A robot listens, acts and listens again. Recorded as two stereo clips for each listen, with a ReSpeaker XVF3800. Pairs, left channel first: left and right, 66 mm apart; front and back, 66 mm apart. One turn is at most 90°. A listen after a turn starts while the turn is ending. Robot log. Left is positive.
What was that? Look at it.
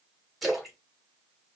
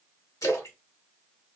end: Facing the splash.